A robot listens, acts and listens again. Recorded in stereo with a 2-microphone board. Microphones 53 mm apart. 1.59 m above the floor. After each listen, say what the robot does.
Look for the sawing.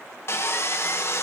Turn 50° left.
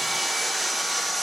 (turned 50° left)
Facing the sawing, 1 to 2 m away.